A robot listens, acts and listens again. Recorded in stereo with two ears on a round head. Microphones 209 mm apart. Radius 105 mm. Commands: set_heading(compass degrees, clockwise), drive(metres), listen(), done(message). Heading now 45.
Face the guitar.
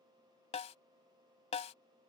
listen()
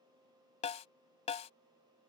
listen()
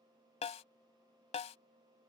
done("I can't make out a guitar to turn to.")